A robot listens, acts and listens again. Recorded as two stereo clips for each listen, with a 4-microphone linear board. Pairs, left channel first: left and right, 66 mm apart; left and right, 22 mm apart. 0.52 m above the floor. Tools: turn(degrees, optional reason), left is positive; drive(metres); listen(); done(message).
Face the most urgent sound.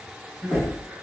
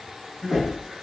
turn(degrees=-45, reason="The crying: about 45° right or 135° right.")
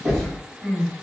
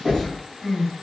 done("Facing the crying, 1 to 2 m away.")